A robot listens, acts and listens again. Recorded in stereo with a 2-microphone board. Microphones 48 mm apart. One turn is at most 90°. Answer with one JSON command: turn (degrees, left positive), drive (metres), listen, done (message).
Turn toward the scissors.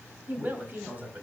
{"listen": true}
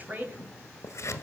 {"turn": 90}
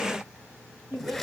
{"done": "Found it: scissors, straight ahead, 1 to 2 m away."}